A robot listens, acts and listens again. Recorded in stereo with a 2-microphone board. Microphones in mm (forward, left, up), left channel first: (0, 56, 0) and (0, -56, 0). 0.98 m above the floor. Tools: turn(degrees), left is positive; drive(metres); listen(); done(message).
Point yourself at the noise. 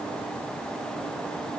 listen()
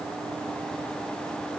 listen()
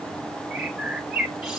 turn(degrees=30)
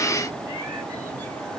listen()
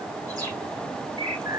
turn(degrees=-30)
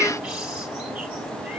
listen()
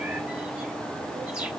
listen()
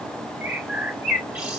turn(degrees=-10)
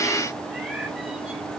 listen()
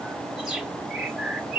done("Facing the bird.")